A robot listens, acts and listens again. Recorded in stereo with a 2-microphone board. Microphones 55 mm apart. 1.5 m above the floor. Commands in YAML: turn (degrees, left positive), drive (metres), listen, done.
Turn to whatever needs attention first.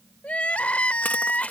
turn: 25
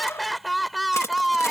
done: "Found it: crying, straight ahead."